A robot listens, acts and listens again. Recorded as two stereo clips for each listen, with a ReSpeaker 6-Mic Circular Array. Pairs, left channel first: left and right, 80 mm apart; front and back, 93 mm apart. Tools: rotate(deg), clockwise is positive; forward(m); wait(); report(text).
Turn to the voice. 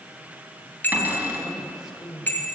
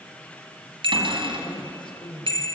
report("Facing the woman speaking, 2 to 4 m away.")